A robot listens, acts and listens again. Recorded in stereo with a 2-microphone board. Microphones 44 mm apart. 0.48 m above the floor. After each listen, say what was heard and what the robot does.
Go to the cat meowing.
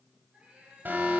The cat meowing: about 30° right or 150° right. Turn 30° right.
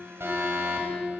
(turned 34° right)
Keep listening.
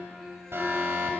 Keep listening.
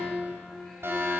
I heard a cat meowing, but can't make it out now. It was about 5° left or 115° right. I did not reach it.